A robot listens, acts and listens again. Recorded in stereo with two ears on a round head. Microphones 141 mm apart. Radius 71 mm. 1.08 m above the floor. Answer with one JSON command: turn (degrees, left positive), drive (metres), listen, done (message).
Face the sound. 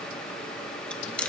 {"turn": 30}
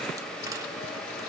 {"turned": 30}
{"listen": true}
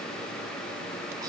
{"listen": true}
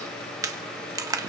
{"turn": -20}
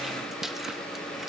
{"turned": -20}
{"listen": true}
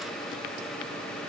{"listen": true}
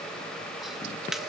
{"done": "Facing the chewing."}